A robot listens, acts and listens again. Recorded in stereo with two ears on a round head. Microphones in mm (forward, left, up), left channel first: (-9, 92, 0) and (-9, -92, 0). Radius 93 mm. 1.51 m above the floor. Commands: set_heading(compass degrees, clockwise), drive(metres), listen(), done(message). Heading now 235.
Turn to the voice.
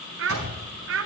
set_heading(300)
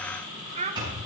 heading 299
set_heading(334)
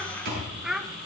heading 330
done("Found it: a child speaking, straight ahead.")